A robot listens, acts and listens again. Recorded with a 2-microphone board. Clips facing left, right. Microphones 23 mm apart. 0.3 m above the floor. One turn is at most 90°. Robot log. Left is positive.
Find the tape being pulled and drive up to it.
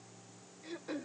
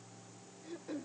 cmd idle
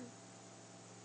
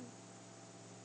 cmd idle
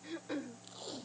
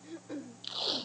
cmd yaw -90
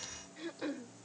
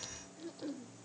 cmd idle
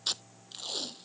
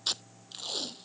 cmd fwd 1.0
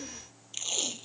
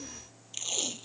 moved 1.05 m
cmd fwd 1.0
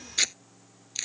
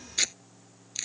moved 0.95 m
note: The tape being pulled is now 10° left.
cmd yaw +10
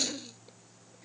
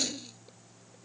cmd fwd 1.0
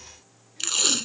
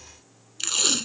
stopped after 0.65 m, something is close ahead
end: I am next to the tape being pulled.